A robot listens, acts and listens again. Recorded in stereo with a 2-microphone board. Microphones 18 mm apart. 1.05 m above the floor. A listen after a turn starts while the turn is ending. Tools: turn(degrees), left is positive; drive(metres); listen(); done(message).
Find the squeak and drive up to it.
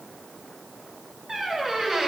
turn(degrees=-25)
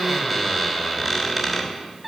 drive(metres=1.0)
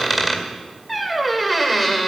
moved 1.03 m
turn(degrees=-10)
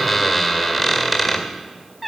drive(metres=1.0)
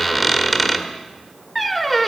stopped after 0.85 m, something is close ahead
done("I am next to the squeak.")